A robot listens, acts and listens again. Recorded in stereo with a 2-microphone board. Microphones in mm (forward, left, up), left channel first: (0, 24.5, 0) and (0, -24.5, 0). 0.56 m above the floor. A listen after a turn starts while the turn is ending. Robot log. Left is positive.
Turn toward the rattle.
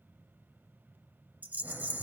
note: The rattle: about 35° right or 145° right.
cmd yaw -35
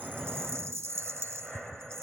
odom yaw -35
note: So it is at 110° right.
cmd yaw -110
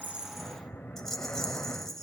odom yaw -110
end: Found it: a rattle, straight ahead, 1 to 2 m away.